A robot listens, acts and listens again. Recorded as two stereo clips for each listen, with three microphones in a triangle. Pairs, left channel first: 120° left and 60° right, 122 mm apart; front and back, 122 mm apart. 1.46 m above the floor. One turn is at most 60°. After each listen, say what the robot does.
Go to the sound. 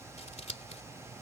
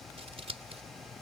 Turn 60° left.
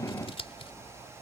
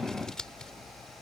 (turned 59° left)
Turn 60° left.
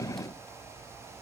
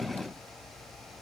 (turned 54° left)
Turn 30° left.
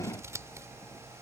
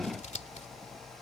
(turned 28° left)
Drive 1.0 m forward.
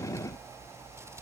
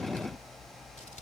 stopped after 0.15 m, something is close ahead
Keep listening.
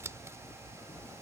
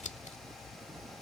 Blocked. The scissors is further on, straight ahead.